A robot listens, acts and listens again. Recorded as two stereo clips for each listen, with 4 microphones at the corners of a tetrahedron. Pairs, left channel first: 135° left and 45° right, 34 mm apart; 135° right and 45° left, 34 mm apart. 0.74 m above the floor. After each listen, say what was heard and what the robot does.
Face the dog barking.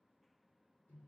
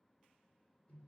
Keep listening.
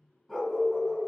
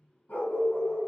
The dog barking: 150° right. Turn 150° right.
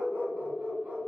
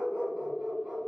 The dog barking is now 25° right. Turn 25° right.
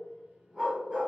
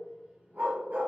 The dog barking is now 15° left. Turn 15° left.
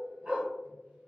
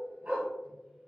Facing the dog barking, 1 to 2 m away.